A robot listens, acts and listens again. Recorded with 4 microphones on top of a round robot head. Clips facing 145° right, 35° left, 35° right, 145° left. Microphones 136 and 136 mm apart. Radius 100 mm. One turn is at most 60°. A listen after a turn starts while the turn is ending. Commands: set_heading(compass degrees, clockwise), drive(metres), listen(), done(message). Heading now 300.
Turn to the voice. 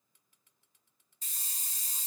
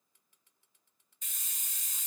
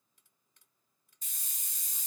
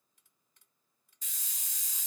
listen()
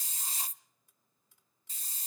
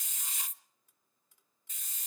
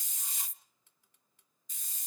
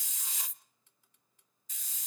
listen()
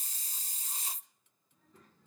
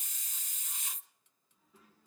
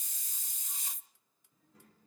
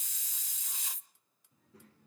set_heading(240)
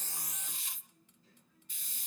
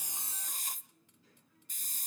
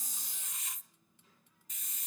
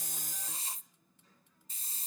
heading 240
set_heading(190)
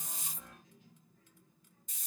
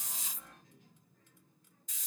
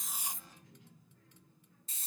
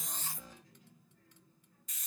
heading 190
set_heading(200)
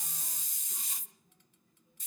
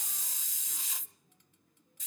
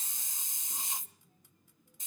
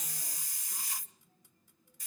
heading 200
done("Found it: a child speaking, straight ahead, over 4 m away.")